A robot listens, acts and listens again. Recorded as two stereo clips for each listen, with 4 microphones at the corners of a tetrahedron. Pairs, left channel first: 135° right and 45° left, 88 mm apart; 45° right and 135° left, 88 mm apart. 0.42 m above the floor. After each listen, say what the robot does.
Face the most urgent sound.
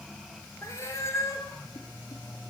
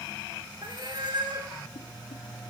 Keep listening.
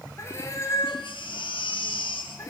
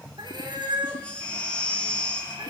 Turn 125° right.
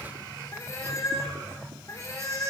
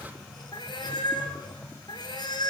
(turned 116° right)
Keep listening.
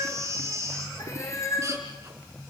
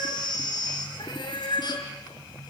Turn 10° right.
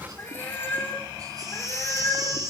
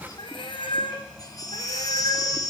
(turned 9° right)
Facing the baby crying, 2 to 4 m away.